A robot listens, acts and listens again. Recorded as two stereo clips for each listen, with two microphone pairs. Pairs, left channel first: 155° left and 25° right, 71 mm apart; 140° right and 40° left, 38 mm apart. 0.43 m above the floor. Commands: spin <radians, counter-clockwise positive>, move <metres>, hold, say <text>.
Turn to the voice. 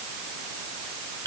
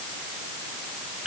hold
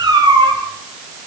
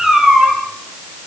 hold
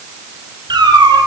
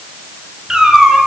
say I can't make out anyone speaking to turn to.